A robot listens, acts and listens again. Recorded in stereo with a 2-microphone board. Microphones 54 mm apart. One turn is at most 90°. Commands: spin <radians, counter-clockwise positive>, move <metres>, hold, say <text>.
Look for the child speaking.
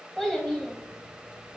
spin 0.52
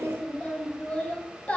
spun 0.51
spin 1.57
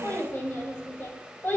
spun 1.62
spin 0.87
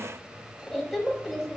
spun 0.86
say Found it: a child speaking, straight ahead, under 1 m away.